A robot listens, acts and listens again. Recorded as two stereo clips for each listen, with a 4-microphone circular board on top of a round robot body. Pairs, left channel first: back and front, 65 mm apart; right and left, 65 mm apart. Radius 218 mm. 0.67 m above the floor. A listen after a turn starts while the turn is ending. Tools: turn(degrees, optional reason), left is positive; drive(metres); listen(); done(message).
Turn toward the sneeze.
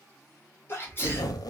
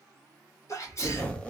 turn(degrees=-125, reason="The sneeze: 125° right.")
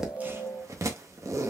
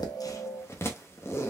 done("I heard a sneeze from this way, but can't make it out now.")